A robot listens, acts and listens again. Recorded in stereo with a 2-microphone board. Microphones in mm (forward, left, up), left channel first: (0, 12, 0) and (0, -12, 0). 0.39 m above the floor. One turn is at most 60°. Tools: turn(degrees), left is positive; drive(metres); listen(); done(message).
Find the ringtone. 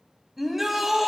listen()
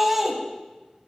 listen()
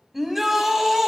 done("I can't make out a ringtone, only a shout.")